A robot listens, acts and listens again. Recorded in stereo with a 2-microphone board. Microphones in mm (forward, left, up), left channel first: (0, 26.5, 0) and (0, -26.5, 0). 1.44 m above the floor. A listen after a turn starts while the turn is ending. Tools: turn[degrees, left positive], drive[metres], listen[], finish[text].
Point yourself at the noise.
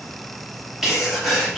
Action: turn[-30]
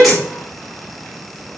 Action: listen[]
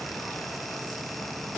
Action: finish[I heard a sneeze, but can't make it out now. It was about 25° left or 145° right.]